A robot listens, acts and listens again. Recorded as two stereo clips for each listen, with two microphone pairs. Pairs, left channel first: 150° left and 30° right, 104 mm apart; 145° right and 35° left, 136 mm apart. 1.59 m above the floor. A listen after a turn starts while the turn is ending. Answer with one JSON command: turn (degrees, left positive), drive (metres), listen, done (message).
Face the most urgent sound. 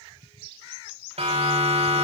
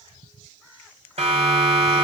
{"turn": -10}
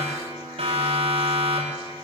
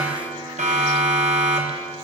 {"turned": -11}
{"done": "Found it: a siren, straight ahead."}